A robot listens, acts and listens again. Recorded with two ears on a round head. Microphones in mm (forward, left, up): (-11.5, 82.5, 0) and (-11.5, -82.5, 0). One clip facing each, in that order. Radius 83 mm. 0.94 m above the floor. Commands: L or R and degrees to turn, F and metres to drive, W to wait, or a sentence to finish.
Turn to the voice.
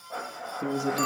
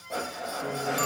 L55
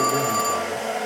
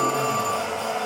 W
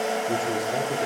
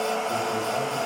W
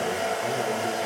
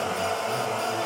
I heard a man speaking, but can't make it out now. It was about straight ahead or 70° left.